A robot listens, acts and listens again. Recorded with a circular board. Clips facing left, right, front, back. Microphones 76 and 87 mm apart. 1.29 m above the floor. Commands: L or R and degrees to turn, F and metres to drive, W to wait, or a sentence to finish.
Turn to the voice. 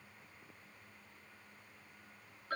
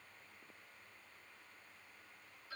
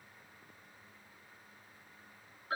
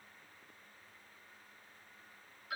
W
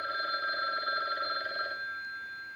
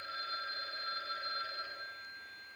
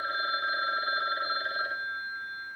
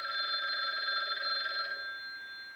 W
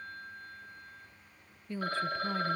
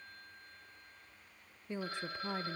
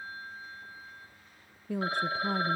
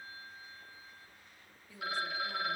R20
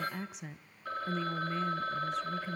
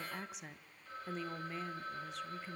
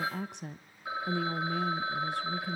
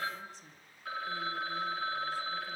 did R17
Found it: a woman speaking, straight ahead.